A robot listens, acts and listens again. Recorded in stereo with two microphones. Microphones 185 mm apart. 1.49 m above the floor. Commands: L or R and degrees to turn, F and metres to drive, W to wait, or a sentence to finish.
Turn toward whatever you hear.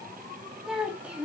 R30
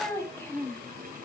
L10
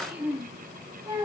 R20
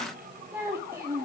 R15
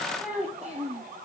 R10
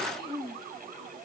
Found it: a child speaking, straight ahead, 2 to 4 m away.